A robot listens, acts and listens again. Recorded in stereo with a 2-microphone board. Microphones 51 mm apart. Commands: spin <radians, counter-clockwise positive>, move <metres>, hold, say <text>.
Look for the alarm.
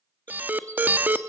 spin -0.61
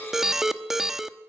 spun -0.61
spin -0.17
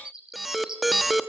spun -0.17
say Facing the alarm.